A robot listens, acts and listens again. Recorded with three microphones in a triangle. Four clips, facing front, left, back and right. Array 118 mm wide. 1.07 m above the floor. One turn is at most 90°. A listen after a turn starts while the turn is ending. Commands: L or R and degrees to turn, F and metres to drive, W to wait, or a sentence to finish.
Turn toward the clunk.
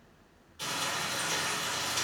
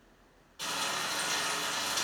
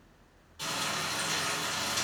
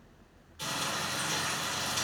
W
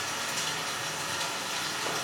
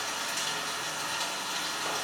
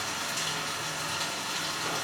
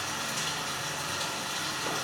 W
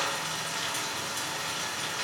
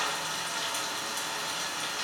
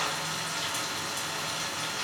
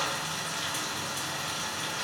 I can't make out a clunk, only frying.